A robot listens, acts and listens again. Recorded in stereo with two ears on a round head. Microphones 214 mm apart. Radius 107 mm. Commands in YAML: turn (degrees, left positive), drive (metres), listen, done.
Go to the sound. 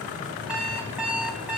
turn: -30
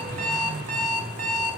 turn: -145
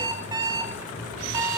turn: -15
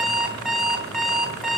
drive: 1.0
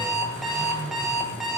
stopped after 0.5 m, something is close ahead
done: "Blocked. The alarm clock is further on, straight ahead."